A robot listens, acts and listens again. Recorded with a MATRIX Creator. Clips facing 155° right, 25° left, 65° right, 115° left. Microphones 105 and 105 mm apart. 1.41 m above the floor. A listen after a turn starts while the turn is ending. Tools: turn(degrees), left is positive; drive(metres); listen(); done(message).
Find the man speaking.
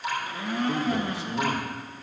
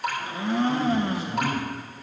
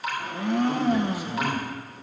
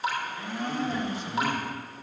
turn(degrees=-150)
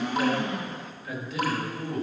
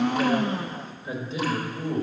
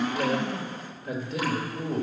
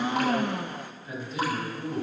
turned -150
turn(degrees=-45)
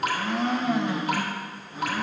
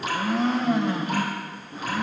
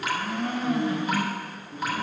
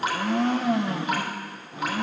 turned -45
turn(degrees=-15)
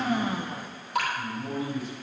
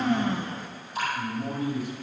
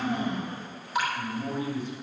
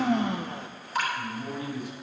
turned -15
done("Facing the man speaking, 2 to 4 m away.")